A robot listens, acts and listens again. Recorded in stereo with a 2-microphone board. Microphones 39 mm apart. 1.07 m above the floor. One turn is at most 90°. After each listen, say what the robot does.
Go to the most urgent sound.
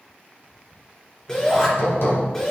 Turn 25° left.
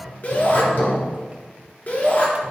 Turn 90° left.
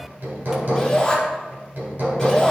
Turn 10° left.
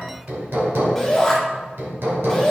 Drive 1.0 m forward.
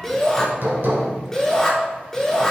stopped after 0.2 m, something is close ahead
Blocked. The shout is further on, straight ahead.